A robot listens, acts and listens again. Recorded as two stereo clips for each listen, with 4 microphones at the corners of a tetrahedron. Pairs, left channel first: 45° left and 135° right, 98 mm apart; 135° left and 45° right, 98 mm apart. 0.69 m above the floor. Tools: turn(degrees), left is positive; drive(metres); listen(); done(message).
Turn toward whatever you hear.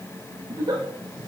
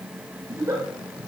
turn(degrees=-100)
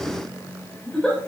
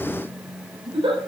turn(degrees=-35)
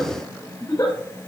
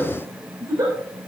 done("Found it: a giggle, straight ahead.")